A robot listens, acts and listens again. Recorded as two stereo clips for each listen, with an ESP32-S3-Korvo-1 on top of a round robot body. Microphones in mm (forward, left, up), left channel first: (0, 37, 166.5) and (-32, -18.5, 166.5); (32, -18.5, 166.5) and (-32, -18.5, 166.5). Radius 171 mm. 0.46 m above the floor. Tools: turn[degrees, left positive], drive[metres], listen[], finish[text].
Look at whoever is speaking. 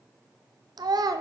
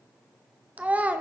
Thought: The child speaking: 110° right.
Action: turn[-110]
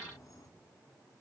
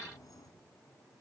Action: listen[]
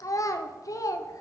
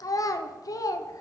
Thought: The child speaking is now 30° left.
Action: turn[30]
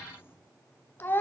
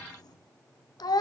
Action: finish[Facing the child speaking, under 1 m away.]